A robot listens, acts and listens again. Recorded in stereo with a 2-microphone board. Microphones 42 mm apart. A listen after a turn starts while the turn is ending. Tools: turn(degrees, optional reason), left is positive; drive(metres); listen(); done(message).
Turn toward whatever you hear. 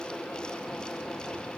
listen()
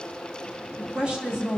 turn(degrees=-20, reason="The woman speaking: about 20° right or 160° right.")
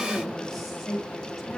done("Facing the woman speaking.")